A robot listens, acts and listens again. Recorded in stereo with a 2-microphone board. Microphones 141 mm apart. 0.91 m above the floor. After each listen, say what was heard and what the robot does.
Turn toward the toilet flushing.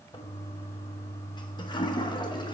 The toilet flushing: about 35° left or 145° left. Turn 35° left.
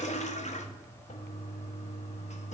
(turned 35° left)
So it is at 105° left. Turn 105° left.
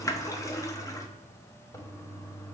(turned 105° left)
The toilet flushing is now 25° left. Turn 25° left.
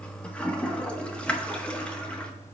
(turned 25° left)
The toilet flushing is now 10° left. Turn 10° left.
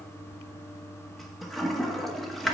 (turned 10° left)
Facing the toilet flushing.